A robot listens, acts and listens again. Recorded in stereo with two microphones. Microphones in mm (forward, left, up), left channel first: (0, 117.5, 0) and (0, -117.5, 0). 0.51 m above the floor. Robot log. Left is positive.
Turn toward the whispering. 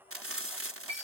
cmd idle
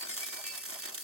cmd idle
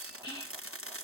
note: The whispering: about 20° left or 160° left.
cmd yaw +20
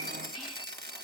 cmd idle
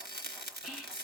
end: Found it: whispering, straight ahead.